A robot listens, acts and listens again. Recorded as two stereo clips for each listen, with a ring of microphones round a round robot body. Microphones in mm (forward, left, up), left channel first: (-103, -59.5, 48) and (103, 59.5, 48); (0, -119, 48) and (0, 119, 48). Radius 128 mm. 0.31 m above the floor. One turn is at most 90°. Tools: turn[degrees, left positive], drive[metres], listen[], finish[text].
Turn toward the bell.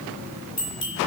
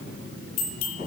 Thought: The bell: 110° right.
Action: turn[-90]
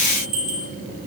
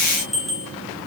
Action: finish[Facing the bell.]